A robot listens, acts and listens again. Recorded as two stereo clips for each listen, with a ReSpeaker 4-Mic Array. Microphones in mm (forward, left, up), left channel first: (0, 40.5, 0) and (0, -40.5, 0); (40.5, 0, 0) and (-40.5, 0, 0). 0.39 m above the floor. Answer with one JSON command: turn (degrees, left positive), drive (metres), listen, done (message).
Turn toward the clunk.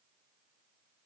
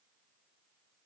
{"listen": true}
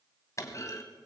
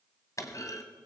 {"turn": 45}
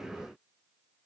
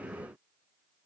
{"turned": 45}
{"done": "Facing where the clunk came from. I can't hear it now."}